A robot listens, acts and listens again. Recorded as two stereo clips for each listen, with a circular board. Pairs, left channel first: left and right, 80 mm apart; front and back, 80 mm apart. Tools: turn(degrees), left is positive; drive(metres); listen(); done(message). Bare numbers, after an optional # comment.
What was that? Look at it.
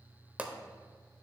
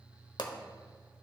# The pop: 20° right.
turn(-20)
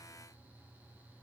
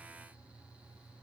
done("I heard a pop from this way, but can't make it out now.")